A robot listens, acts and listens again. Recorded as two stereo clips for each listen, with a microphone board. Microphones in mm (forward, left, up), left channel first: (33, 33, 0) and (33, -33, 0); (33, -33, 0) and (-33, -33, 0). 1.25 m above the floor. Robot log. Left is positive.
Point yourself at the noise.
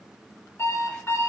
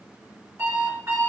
note: The alarm clock: 130° left.
cmd yaw +130
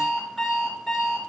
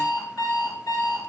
end: Facing the alarm clock.